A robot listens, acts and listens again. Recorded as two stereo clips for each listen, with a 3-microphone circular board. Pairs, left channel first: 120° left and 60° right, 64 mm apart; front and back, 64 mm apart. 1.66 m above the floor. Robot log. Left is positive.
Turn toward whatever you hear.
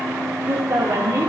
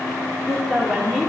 note: The woman speaking: 90° right.
cmd yaw -90
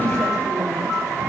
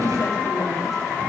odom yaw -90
cmd idle
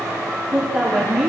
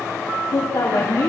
note: The woman speaking is now 30° left.
cmd yaw +30
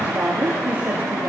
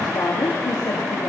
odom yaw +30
end: Facing the woman speaking, over 4 m away.